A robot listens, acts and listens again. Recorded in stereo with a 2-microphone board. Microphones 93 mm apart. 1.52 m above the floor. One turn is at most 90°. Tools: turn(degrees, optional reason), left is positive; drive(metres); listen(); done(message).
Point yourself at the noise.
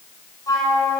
turn(degrees=40, reason="The flute: about 40° left or 140° left.")
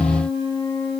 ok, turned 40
turn(degrees=90, reason="So it is at 105° left.")
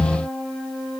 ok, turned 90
done("Facing the flute, over 4 m away.")